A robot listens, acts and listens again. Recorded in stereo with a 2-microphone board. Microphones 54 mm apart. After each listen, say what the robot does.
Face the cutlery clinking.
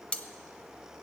Turn 20° left.
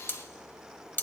Turn 135° left.
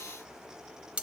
Turn 25° right.
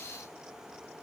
Keep listening.
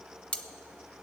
Turn 25° left.
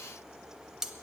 Turn 10° right.
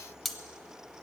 Facing the cutlery clinking.